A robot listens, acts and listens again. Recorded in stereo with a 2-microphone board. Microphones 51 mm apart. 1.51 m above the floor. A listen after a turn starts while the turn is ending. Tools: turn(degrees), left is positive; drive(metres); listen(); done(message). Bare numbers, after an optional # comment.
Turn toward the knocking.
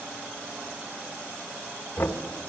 # The knocking: about 55° left or 125° left.
turn(55)
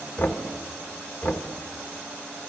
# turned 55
# So it is at 65° left.
turn(65)
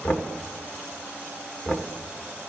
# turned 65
# The knocking is now 35° left.
turn(35)
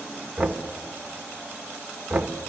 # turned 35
# The knocking is now 10° right.
turn(-10)
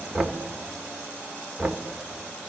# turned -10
done("Facing the knocking, 1 to 2 m away.")